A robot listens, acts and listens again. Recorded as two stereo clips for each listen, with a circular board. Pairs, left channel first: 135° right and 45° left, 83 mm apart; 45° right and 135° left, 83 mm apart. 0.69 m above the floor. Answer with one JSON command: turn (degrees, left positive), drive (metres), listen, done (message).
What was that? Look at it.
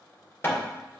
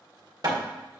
{"turn": 165}
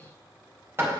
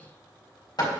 {"turn": -15}
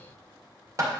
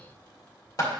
{"done": "Facing the hammering."}